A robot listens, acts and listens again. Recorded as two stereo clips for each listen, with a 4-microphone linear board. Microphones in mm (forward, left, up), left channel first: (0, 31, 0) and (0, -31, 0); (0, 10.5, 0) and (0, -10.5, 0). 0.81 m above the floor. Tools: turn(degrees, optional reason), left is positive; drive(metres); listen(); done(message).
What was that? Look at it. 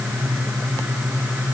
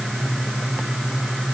listen()
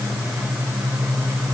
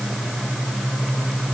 listen()
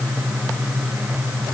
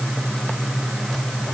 done("I can't make out anything to turn to.")